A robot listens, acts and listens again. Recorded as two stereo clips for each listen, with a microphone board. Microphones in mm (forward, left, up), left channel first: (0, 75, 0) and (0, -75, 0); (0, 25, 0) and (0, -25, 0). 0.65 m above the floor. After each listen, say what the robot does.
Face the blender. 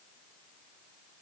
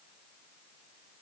Keep listening.
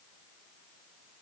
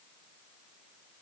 Keep listening.
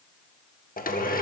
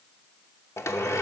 Turn 70° left.
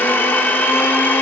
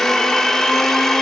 Turn 15° left.
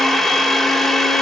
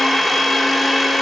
Found it: a blender, straight ahead.